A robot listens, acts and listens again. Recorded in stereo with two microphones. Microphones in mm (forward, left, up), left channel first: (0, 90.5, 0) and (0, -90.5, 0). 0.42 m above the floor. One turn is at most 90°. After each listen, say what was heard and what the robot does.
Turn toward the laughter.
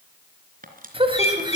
The laughter: about 30° right or 150° right. Turn 30° right.
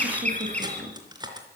Keep listening.
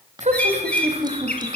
The laughter: about 35° right or 145° right. Turn 35° right.
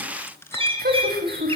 So it is at 125° right. Turn 90° right.
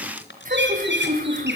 The laughter is now 50° right. Turn 50° right.
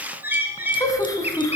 The laughter is now 20° left. Turn 20° left.
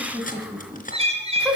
Facing the laughter.